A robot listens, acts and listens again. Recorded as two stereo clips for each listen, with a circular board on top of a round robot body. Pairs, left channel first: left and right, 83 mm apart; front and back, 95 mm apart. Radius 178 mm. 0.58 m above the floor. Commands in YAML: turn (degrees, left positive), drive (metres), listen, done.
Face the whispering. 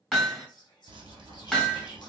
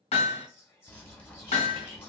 turn: 65
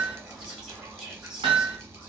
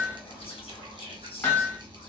listen: true
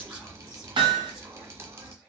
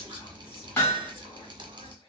listen: true
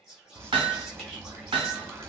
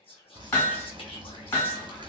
done: "Facing the whispering, 2 to 4 m away."